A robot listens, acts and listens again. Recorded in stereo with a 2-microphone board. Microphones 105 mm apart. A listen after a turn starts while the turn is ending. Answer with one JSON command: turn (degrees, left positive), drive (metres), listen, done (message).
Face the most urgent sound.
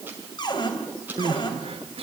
{"turn": -70}
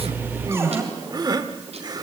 {"turn": -40}
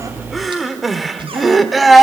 {"done": "Facing the crying, 1 to 2 m away."}